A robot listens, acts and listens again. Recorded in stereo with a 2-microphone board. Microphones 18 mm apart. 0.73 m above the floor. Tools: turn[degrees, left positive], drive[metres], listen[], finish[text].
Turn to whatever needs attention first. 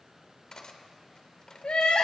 Action: turn[90]
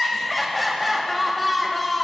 Action: finish[Found it: crying, straight ahead, 2 to 4 m away.]